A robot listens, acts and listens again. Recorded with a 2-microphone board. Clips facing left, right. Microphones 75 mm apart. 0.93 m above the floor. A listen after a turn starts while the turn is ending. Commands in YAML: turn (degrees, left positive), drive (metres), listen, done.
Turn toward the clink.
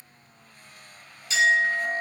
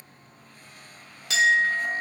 turn: -70
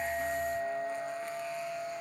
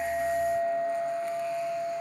done: "Found it: a clink, straight ahead."